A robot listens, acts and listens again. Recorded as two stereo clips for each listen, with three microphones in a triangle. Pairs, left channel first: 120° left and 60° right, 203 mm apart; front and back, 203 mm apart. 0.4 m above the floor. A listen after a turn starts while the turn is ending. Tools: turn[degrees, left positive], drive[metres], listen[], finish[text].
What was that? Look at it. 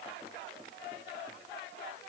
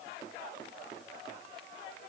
Action: listen[]
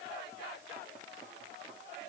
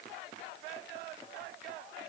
Action: listen[]
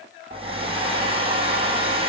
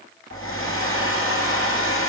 Action: finish[Facing the hair dryer, 2 to 4 m away.]